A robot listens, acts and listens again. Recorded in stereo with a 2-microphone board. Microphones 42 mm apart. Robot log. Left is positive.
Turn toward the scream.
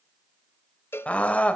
note: The scream: about 35° left or 145° left.
cmd yaw +35
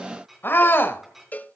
note: So it is at 105° left.
cmd yaw +105
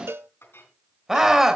note: The scream is now 10° right.
cmd yaw -10
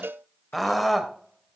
end: Found it: a scream, straight ahead.